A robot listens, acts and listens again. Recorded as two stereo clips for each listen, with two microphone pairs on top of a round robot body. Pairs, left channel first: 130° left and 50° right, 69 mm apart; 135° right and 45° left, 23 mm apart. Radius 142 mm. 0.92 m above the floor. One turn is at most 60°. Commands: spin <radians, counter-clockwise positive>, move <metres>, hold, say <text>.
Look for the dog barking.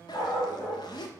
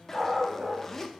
spin 1.05
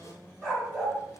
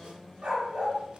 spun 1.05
spin 0.79
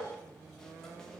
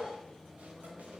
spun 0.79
hold
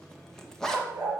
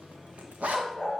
spin 0.17
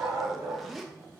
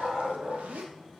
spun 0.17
say Found it: a dog barking, straight ahead, 2 to 4 m away.